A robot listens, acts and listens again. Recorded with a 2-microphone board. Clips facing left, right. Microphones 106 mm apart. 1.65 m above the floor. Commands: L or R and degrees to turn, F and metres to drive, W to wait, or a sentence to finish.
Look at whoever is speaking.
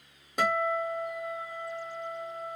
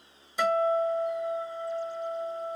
W
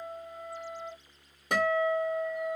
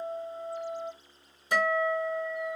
W
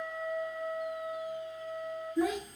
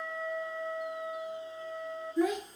L30
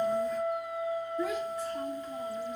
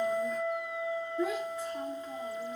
R30
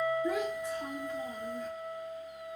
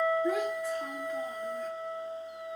Found it: a child speaking, straight ahead, 1 to 2 m away.